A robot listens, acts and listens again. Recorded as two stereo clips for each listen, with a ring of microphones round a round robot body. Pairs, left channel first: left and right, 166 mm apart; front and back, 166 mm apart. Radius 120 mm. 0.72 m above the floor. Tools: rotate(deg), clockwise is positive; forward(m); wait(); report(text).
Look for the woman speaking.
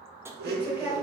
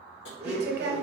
rotate(170)
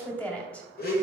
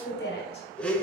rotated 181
rotate(-10)
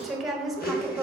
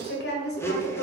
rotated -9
report("Found it: a woman speaking, straight ahead.")